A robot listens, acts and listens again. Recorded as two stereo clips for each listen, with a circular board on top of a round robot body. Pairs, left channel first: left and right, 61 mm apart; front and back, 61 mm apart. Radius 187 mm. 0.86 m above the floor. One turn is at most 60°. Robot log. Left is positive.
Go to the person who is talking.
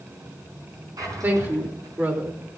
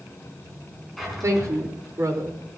note: The woman speaking: 145° right.
cmd yaw -60
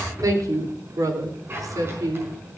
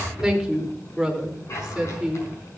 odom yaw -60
note: The woman speaking is now 95° right.
cmd yaw -60
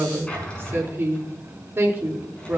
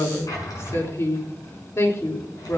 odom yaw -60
note: The woman speaking is now 40° right.
cmd yaw -40
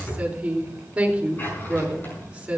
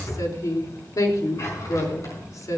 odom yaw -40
note: The woman speaking is now 20° right.
cmd yaw -20
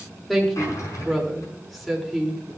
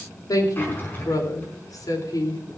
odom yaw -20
cmd fwd 1.0
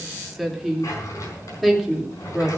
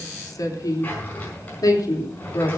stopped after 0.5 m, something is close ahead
end: Blocked. The woman speaking is further on, straight ahead.